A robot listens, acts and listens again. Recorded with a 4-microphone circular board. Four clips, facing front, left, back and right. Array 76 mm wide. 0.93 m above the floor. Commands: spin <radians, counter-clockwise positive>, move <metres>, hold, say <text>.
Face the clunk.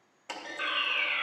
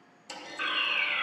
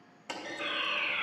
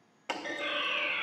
spin -1.57
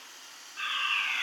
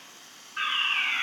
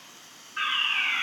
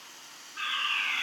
say Facing where the clunk came from. I can't hear it now.